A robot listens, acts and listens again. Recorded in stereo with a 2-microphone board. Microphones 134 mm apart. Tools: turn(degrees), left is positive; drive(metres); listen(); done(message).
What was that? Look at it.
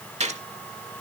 turn(degrees=-60)
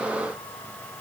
listen()
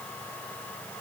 done("I heard a gunshot, but can't make it out now. It was about straight ahead or 60° right.")